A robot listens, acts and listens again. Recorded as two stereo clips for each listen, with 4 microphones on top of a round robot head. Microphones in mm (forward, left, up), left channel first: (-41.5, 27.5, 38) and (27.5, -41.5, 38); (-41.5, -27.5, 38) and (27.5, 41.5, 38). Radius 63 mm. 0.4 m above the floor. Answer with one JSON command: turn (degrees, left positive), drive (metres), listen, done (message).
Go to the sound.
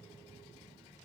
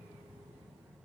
{"listen": true}
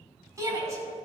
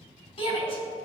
{"turn": -105}
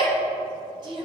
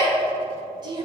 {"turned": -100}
{"drive": 1.0}
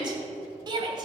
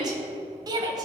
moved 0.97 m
{"drive": 1.0}
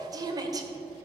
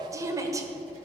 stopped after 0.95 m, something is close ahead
{"done": "Arrived at the shout, straight ahead."}